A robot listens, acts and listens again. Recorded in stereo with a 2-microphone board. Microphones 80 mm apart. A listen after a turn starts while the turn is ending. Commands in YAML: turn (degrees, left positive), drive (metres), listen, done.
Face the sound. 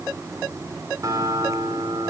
turn: -40
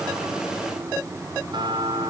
turn: -100
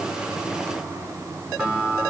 turn: -15
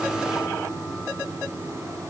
listen: true
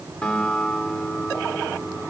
turn: 10
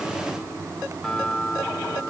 done: "Found it: a guitar, straight ahead."